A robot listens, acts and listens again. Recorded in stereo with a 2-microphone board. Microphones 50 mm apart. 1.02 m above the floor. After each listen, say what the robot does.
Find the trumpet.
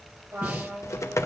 Turn 60° right.
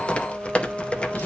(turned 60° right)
Facing the trumpet.